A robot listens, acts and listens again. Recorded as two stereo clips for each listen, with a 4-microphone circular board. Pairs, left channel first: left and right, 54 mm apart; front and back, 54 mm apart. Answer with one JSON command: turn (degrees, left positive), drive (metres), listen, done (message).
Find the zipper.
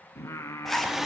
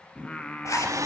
{"done": "Facing the zipper."}